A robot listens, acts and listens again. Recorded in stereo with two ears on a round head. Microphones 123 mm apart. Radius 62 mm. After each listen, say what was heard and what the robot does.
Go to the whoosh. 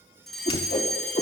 The whoosh: about 40° left or 140° left. Turn 40° left.
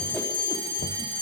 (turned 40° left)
Keep listening.
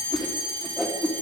Drive 1.0 m forward.
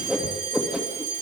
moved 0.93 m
Drive 1.0 m forward.
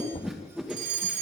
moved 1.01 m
Drive 1.0 m forward.
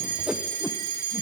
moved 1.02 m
The whoosh is now 10° right. Turn 10° right.
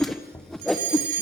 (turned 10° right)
Drive 1.0 m forward.
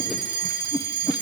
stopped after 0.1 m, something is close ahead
Arrived at the whoosh, straight ahead.